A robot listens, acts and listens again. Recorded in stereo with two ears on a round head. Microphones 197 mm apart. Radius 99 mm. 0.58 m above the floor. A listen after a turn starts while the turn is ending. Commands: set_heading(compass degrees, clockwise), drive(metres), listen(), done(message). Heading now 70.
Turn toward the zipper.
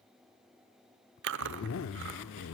set_heading(5)
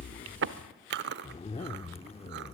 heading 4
set_heading(334)
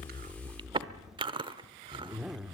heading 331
done("Found it: a zipper, straight ahead.")